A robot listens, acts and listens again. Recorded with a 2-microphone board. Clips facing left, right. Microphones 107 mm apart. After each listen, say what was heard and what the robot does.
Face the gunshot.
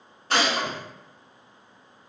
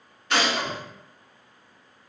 The gunshot: about 40° left or 140° left. Turn 40° left.
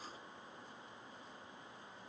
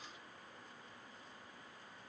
Keep listening.
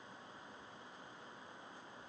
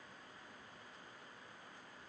I heard a gunshot, but can't make it out now. It was about straight ahead or 100° left.